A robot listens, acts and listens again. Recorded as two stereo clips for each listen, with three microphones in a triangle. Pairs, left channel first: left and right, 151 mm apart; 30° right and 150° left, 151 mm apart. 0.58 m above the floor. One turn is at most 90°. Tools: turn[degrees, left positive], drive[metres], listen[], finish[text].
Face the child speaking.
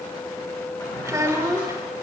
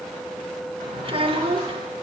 Thought: The child speaking: 160° right.
Action: turn[-90]
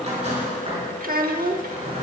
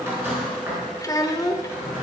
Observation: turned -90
Thought: The child speaking is now 95° right.
Action: turn[-90]
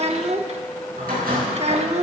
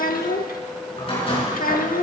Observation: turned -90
Thought: The child speaking is now 45° right.
Action: turn[-45]
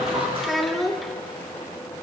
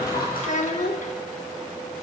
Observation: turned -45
Action: finish[Facing the child speaking.]